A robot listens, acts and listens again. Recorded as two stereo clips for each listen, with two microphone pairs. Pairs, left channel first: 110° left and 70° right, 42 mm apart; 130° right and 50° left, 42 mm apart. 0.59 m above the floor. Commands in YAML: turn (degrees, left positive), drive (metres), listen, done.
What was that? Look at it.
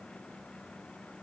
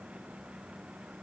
listen: true
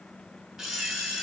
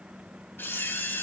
turn: -145
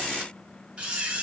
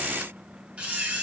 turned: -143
done: "Facing the camera shutter, 2 to 4 m away."